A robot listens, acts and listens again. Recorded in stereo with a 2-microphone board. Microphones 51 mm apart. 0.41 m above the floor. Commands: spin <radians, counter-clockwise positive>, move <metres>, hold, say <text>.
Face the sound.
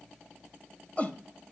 spin 0.52
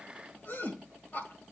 spin 2.01
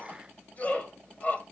spin 0.79
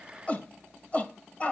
spin 0.61
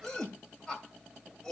spin 0.17
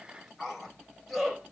say Facing the shout, 2 to 4 m away.